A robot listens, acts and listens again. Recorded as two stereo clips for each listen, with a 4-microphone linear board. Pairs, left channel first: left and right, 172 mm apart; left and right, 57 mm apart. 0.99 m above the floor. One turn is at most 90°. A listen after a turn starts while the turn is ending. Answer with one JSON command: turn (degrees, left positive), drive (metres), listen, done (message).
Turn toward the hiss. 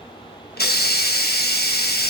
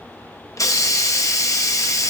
{"turn": 75}
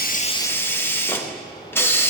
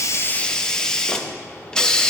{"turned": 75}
{"turn": 15}
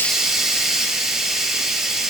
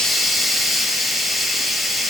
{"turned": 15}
{"done": "Facing the hiss."}